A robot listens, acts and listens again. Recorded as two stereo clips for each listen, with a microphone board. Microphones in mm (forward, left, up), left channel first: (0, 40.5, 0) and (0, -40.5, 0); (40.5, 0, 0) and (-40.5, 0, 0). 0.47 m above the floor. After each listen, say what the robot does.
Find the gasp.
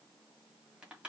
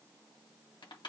Keep listening.
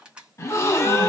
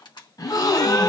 Turn 35° left.
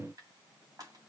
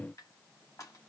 I heard a gasp from this way, but can't make it out now.